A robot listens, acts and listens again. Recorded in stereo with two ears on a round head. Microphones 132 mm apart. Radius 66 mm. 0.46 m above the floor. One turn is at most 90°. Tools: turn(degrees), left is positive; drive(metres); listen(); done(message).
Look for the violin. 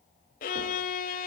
turn(degrees=60)
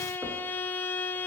turn(degrees=15)
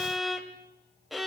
done("Facing the violin.")